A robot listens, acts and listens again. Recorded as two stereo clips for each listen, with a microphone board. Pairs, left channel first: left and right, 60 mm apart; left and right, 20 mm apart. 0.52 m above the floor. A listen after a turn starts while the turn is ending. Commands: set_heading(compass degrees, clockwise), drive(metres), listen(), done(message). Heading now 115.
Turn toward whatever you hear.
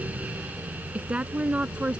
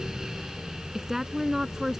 set_heading(130)
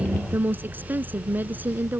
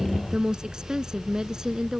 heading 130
set_heading(160)
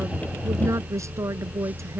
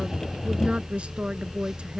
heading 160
set_heading(290)
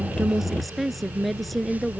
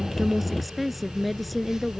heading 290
done("Found it: a woman speaking, straight ahead.")